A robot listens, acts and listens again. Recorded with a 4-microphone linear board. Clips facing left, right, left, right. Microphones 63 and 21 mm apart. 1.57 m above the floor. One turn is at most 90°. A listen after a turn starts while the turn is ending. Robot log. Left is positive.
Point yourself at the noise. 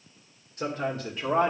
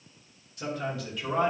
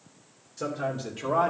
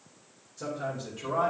note: The man speaking: about 30° left or 150° left.
cmd yaw +30
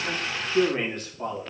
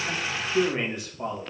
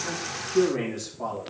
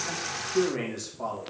note: So it is at 15° right.
cmd yaw -15
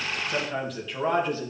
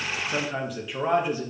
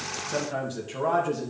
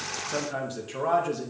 note: The man speaking is now 10° right.
cmd yaw -10
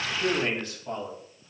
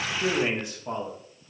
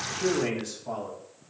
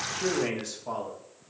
note: The man speaking is now 15° right.
cmd yaw -15
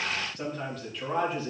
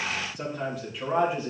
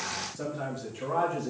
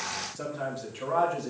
note: The man speaking is now 15° right.
cmd yaw -15
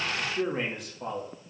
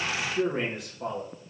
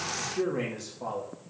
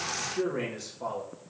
end: Found it: a man speaking, straight ahead, 2 to 4 m away.